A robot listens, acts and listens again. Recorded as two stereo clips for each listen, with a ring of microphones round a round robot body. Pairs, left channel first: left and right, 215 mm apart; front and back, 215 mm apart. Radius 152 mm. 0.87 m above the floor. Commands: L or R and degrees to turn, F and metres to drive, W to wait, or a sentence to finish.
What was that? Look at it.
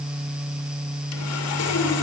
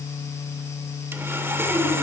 L100
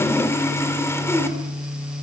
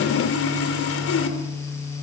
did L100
L10
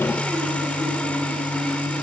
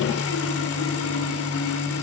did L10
Facing the sawing.